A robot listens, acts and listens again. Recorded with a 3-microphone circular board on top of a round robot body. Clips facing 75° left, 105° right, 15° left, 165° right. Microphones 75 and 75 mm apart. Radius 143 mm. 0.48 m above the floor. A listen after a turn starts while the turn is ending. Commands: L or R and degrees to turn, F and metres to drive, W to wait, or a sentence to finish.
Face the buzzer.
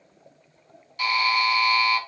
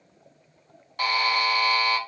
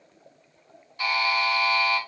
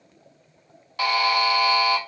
R150
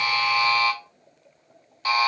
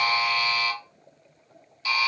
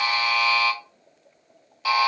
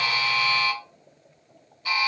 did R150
L25
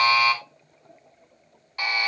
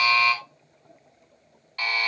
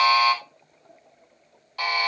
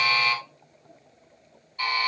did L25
Facing the buzzer, under 1 m away.